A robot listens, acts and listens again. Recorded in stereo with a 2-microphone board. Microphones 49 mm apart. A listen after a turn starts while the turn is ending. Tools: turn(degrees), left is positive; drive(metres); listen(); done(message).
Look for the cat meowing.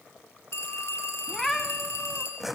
turn(degrees=30)
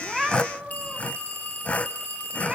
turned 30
turn(degrees=-25)
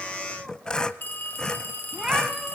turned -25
turn(degrees=-15)
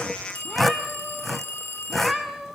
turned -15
done("Found it: a cat meowing, straight ahead.")